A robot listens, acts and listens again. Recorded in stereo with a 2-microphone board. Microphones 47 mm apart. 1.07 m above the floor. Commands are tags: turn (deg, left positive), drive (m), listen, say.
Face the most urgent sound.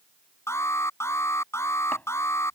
<turn deg="75"/>
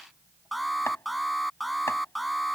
<say>Found it: an alarm, straight ahead.</say>